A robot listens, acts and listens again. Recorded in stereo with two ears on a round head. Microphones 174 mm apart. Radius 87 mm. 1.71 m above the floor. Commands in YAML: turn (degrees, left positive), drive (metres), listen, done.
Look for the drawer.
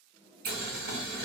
turn: 30
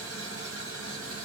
listen: true
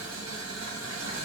listen: true
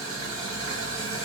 done: "I heard a drawer, but can't make it out now. It was about 30° right or 150° left."